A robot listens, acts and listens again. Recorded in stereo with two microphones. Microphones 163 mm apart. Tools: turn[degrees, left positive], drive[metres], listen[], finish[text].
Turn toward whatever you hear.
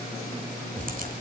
Thought: The crack: about 60° right or 120° right.
Action: turn[-60]
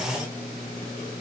Action: listen[]
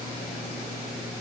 Action: finish[I heard a crack, but can't make it out now. It was about straight ahead or 60° right.]